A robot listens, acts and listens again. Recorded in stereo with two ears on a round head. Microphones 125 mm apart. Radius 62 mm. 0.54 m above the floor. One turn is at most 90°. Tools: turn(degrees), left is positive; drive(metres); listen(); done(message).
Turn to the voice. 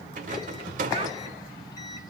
listen()
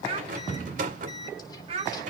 turn(degrees=-45)
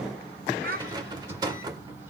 turn(degrees=-85)
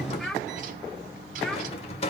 done("Facing the child speaking.")